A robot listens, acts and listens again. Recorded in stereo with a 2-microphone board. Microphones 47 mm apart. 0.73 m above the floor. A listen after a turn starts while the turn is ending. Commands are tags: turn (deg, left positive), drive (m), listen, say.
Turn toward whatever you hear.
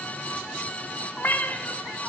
<turn deg="45"/>
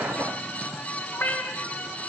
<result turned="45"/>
<turn deg="95"/>
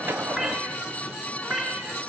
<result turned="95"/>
<say>Facing the cat meowing, over 4 m away.</say>